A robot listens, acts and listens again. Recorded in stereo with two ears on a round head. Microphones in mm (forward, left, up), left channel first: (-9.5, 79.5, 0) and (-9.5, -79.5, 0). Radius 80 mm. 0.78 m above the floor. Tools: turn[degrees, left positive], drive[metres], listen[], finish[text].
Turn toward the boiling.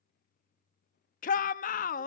Action: listen[]
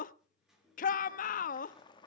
Thought: The boiling: about 25° left or 155° left.
Action: turn[25]
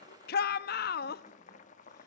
Thought: So it is at 125° left.
Action: turn[125]
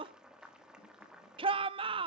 Action: finish[Found it: boiling, straight ahead.]